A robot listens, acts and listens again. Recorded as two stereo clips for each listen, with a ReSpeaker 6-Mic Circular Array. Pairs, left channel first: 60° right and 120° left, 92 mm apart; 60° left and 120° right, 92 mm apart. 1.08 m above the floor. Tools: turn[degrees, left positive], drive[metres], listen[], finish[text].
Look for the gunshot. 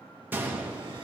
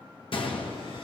Thought: The gunshot: 50° left.
Action: turn[50]
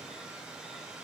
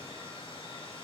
Action: finish[I heard a gunshot from this way, but can't make it out now.]